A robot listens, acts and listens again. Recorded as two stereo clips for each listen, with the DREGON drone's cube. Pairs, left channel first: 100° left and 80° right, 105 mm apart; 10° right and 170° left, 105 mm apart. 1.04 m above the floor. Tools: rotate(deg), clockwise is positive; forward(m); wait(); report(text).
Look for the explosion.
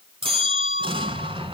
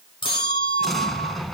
rotate(100)
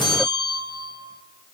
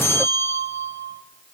report("I heard an explosion from this way, but can't make it out now.")